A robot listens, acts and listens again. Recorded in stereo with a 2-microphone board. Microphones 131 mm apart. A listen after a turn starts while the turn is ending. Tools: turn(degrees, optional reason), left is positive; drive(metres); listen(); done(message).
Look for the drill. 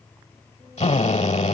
turn(degrees=50, reason="The drill: about 50° left or 130° left.")
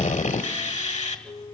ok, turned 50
turn(degrees=70, reason="So it is at 70° left.")
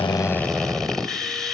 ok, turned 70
done("Facing the drill, 1 to 2 m away.")